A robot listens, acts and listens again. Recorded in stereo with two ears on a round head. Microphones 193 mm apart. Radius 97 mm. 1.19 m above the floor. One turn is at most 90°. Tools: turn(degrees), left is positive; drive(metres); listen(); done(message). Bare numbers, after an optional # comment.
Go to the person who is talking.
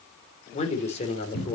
# The man speaking: about 30° left or 150° left.
turn(30)
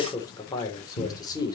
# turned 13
# So it is at 15° left.
turn(15)
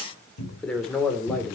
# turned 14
drive(1.0)
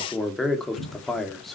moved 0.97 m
drive(1.0)
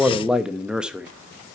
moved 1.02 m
drive(1.0)
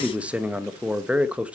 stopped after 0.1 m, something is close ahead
done("Arrived at the man speaking, straight ahead.")